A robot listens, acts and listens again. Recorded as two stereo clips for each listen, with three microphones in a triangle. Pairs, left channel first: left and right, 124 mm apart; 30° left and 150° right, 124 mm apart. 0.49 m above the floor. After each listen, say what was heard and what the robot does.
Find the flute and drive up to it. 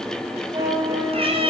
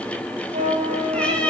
The flute: 145° right. Turn 145° right.
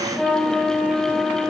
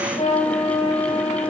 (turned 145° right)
Drive 1.0 m forward.
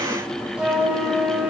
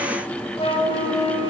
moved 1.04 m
The flute is now 10° right. Turn 10° right.
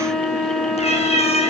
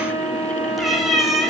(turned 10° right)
Drive 1.0 m forward.
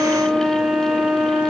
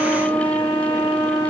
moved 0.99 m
The flute is now 10° right. Turn 10° right.
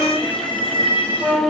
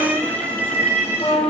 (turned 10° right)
Drive 1.0 m forward.
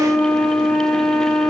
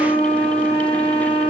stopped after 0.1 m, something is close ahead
I am next to the flute.